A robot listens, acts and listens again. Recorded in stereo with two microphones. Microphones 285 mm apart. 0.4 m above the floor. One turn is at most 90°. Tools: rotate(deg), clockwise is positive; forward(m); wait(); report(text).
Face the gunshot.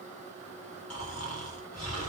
wait()
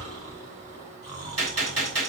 rotate(60)
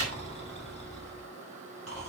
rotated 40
wait()
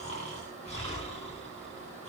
report("I heard a gunshot, but can't make it out now. It was about 20° right or 80° right.")